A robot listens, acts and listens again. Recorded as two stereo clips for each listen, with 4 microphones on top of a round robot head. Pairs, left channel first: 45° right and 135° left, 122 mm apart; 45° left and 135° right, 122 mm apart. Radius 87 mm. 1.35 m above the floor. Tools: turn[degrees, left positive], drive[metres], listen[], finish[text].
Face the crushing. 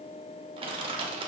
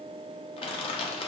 Thought: The crushing: 90° left.
Action: turn[90]
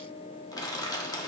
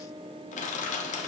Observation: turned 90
Thought: The crushing is now 20° left.
Action: turn[20]
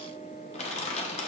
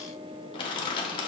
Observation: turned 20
Action: finish[Facing the crushing.]